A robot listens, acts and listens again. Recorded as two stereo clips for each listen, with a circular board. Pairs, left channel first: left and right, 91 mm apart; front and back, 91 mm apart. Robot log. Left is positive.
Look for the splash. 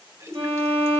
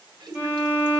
note: The splash: 145° right.
cmd yaw -145
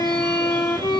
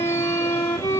end: Facing where the splash came from. I can't hear it now.